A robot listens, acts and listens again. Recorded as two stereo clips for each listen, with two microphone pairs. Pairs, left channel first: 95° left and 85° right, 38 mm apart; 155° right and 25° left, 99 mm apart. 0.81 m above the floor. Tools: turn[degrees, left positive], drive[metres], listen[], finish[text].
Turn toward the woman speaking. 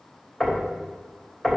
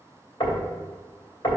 Action: listen[]
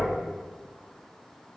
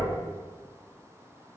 Action: listen[]
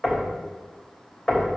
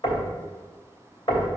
Action: finish[I can't make out a woman speaking to turn to.]